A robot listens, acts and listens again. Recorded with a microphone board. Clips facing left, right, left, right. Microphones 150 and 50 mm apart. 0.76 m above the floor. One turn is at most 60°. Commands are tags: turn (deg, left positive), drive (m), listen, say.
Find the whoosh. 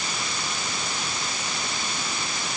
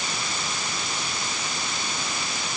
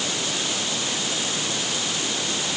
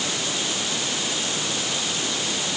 <listen/>
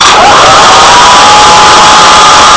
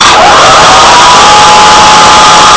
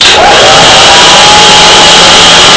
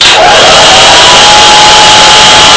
<listen/>
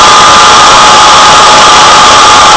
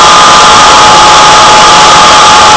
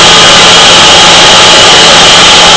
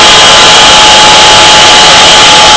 <say>I can't make out a whoosh, only a hair dryer.</say>